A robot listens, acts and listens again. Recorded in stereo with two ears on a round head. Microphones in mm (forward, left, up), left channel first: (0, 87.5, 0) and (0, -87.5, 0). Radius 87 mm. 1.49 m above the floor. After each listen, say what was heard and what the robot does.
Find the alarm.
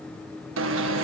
The alarm: about 70° right or 110° right. Turn 70° right.
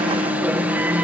So it is at 10° right. Turn 10° right.
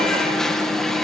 Facing the alarm.